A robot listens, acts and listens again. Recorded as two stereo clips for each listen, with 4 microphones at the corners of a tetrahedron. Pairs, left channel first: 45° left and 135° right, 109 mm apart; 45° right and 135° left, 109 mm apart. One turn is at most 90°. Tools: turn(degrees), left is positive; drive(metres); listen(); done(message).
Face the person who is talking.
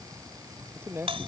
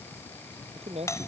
turn(degrees=90)
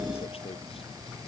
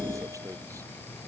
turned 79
turn(degrees=75)
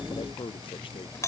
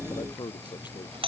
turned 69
turn(degrees=10)
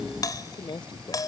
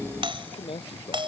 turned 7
done("Found it: a man speaking, straight ahead.")